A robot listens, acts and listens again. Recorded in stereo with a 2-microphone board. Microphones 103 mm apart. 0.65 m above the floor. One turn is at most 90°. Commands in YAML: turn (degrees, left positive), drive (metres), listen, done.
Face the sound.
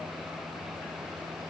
listen: true
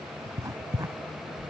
turn: -35
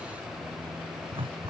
turn: -90
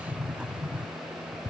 turn: -10
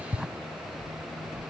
done: "Found it: writing, straight ahead."